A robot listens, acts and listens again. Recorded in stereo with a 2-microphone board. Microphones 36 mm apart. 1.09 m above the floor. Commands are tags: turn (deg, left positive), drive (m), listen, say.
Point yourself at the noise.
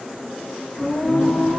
<turn deg="-30"/>
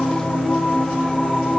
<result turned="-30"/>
<turn deg="30"/>
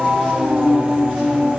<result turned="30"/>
<turn deg="-45"/>
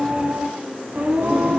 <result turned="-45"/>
<turn deg="-60"/>
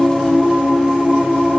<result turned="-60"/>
<turn deg="-10"/>
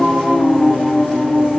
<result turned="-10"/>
<say>Found it: singing, straight ahead.</say>